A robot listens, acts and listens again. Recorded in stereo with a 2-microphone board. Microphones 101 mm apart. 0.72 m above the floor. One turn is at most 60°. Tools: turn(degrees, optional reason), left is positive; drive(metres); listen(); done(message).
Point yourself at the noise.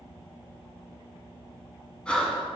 turn(degrees=30)
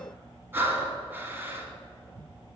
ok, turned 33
turn(degrees=-20, reason="So it is at 20° right.")
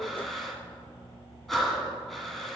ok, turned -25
done("Found it: breathing, straight ahead.")